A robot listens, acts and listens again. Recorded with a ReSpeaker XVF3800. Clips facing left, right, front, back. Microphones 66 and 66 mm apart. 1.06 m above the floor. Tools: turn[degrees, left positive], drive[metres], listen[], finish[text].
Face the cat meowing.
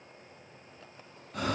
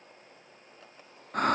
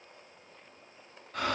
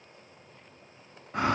Action: listen[]
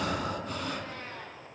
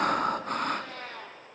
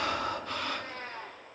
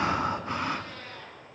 Thought: The cat meowing: 60° right.
Action: turn[-60]
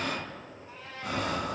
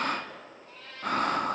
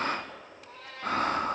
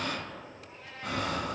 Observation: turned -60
Thought: The cat meowing is now 15° left.
Action: turn[15]
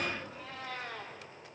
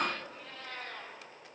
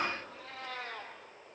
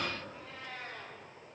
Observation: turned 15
Action: finish[Facing the cat meowing.]